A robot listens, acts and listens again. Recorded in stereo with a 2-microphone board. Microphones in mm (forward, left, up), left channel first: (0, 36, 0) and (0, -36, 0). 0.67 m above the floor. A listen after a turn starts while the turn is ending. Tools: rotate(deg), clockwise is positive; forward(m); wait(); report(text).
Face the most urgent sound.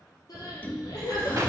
rotate(-55)
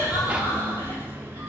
wait()
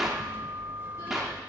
wait()
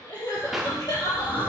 rotate(-70)
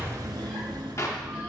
wait()
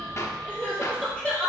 rotate(-15)
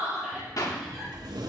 report("Found it: crying, straight ahead.")